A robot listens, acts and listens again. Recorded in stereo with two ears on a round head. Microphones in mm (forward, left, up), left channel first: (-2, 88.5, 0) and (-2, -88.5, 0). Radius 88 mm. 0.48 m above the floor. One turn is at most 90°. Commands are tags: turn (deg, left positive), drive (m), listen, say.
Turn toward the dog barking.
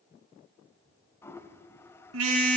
<listen/>
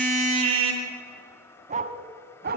<turn deg="-50"/>
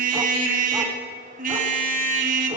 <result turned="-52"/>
<listen/>
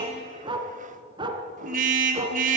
<turn deg="-25"/>
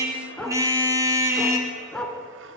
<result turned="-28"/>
<say>Found it: a dog barking, straight ahead.</say>